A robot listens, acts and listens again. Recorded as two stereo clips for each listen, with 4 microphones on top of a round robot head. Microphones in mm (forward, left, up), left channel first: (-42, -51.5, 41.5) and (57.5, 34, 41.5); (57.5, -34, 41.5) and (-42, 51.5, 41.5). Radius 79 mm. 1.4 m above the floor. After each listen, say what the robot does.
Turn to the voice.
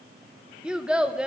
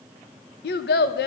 Turn 40° right.
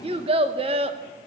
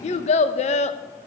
Found it: a child speaking, straight ahead, under 1 m away.